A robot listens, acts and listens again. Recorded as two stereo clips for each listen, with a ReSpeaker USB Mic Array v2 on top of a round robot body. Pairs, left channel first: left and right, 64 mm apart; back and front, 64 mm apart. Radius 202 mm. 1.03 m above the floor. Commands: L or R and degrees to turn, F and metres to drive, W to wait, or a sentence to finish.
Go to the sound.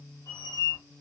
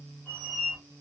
L110
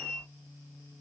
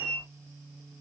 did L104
F1.0
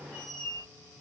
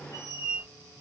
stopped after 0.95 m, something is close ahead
L15
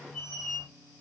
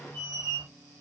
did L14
Arrived at the squeak, straight ahead.